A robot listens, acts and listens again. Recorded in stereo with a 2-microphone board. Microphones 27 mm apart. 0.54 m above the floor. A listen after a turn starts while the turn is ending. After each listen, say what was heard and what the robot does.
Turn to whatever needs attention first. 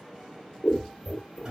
Keep listening.
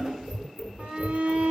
The shout: about 50° right or 130° right. Turn 50° right.
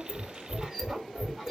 Keep listening.
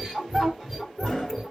So it is at 15° right. Turn 15° right.
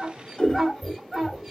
Found it: a shout, straight ahead, 1 to 2 m away.